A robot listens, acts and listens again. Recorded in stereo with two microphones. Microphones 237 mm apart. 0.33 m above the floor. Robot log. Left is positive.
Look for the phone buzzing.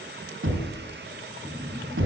cmd yaw -30
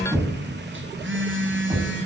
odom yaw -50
note: So it is at 125° right.
cmd yaw -125
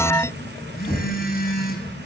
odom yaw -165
note: The phone buzzing is now 40° left.
cmd yaw +40
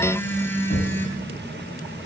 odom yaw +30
note: The phone buzzing is now 10° left.
cmd yaw +10
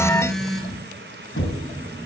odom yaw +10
end: Found it: a phone buzzing, straight ahead.